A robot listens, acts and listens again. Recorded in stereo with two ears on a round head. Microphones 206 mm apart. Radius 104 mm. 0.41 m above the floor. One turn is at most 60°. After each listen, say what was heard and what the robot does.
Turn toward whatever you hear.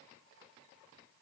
Keep listening.
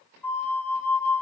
Turn 30° left.
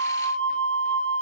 So it is at 20° right. Turn 20° right.
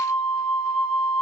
Facing the flute.